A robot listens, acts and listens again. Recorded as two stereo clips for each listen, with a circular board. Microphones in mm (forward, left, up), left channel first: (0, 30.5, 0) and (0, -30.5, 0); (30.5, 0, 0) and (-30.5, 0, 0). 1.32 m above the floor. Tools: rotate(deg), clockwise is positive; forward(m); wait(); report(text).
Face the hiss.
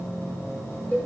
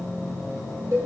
wait()
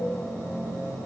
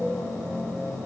wait()
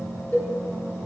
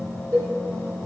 report("I can't make out a hiss, only a cowbell.")